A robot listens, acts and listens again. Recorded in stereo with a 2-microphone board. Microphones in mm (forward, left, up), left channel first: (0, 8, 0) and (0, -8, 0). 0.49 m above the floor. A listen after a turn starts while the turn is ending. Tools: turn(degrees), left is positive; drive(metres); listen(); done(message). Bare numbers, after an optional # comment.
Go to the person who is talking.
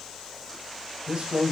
# The man speaking: about 55° right or 125° right.
turn(-55)
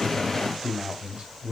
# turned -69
# So it is at 50° right.
turn(-50)
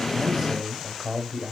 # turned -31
# The man speaking is now 20° right.
turn(-20)
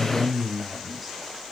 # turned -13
drive(1.0)
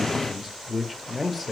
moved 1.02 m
drive(1.0)
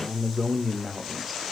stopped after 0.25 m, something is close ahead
done("I am next to the man speaking.")